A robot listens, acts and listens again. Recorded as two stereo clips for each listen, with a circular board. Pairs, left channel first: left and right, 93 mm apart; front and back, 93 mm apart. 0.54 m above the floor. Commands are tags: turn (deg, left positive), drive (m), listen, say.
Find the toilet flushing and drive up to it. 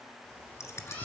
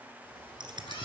<listen/>
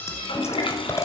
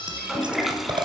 <turn deg="90"/>
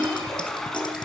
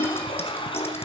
<drive m="1.0"/>
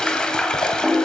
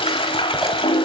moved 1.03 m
<turn deg="10"/>
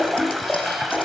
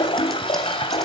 <drive m="1.0"/>
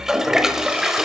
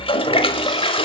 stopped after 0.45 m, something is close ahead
<say>I am next to the toilet flushing.</say>